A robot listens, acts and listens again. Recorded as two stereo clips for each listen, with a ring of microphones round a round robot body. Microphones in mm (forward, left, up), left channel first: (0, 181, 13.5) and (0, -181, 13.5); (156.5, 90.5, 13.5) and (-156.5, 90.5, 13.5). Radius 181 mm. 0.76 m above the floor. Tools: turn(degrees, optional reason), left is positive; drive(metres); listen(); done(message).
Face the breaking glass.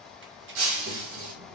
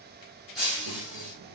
turn(degrees=-90, reason="The breaking glass: 90° right.")
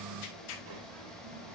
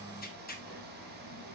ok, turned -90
done("I heard breaking glass from this way, but can't make it out now.")